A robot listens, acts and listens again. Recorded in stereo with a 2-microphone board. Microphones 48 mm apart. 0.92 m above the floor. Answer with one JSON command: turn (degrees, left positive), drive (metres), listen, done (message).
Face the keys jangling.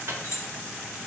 {"turn": 90}
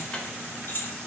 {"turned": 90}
{"turn": 50}
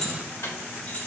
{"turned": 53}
{"turn": 30}
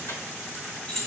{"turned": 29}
{"turn": 15}
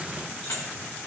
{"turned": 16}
{"listen": true}
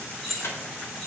{"turn": 10}
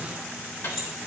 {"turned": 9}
{"done": "Facing the keys jangling."}